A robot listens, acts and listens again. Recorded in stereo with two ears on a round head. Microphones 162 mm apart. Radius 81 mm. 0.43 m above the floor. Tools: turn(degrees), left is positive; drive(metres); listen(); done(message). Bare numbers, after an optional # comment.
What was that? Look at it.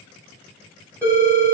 turn(30)
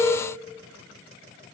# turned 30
# So it is at 135° left.
turn(135)
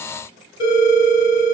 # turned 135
# The phone ringing is now 25° left.
turn(25)
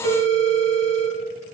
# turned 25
done("Found it: a phone ringing, straight ahead, 1 to 2 m away.")